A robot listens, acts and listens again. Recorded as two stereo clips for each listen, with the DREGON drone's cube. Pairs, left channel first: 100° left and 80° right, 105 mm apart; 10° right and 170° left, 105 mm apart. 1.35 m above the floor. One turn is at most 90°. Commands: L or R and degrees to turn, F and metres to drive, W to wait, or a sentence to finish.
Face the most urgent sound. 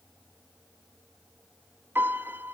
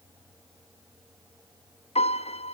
W
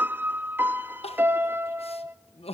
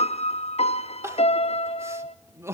L90
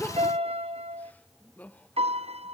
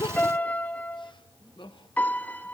L25
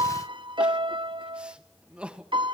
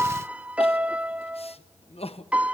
Found it: crying, straight ahead, 1 to 2 m away.